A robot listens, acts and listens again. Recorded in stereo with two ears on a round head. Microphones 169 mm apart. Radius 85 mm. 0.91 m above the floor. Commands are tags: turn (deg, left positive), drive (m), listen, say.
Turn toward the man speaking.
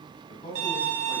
<turn deg="35"/>
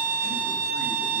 <listen/>
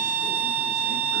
<listen/>
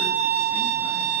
<say>I heard a man speaking, but can't make it out now. It was about straight ahead or 110° left.</say>